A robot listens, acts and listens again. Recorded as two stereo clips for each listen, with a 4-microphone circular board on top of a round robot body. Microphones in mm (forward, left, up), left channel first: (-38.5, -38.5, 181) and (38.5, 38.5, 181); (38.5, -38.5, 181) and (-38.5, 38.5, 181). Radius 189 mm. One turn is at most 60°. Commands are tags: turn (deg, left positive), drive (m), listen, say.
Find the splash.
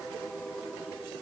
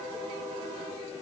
<listen/>
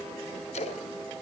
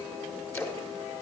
<turn deg="-60"/>
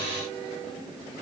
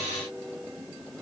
<turn deg="-50"/>
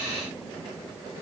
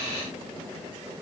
<say>I heard a splash from this way, but can't make it out now.</say>